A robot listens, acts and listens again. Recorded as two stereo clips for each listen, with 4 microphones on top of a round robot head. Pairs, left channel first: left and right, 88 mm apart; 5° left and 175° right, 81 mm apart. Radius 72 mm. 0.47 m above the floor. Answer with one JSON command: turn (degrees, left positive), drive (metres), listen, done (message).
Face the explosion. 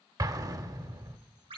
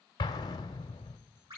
{"turn": -45}
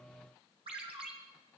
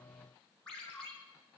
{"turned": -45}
{"done": "Facing where the explosion came from. I can't hear it now."}